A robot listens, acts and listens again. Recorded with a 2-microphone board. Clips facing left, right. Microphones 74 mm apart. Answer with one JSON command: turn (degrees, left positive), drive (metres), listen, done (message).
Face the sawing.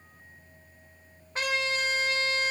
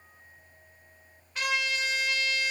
{"listen": true}
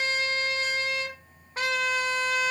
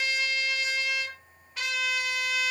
{"listen": true}
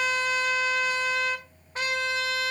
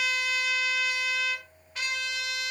{"done": "I can't make out sawing, only a trumpet."}